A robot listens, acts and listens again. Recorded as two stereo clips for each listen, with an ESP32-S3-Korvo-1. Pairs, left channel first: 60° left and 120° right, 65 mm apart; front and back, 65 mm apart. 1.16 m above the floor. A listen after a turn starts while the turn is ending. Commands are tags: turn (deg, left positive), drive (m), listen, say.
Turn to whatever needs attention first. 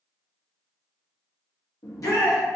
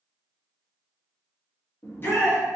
<turn deg="50"/>
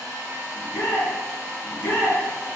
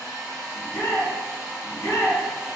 <turn deg="15"/>
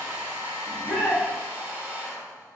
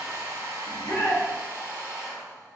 <say>Facing the shout.</say>